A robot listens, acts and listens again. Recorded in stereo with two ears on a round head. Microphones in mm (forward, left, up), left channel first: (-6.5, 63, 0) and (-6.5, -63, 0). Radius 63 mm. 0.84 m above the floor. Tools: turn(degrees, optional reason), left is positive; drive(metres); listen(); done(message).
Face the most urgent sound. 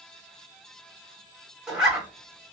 listen()
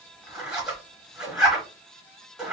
listen()
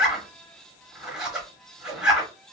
done("I can't make out anything urgent, only a zipper.")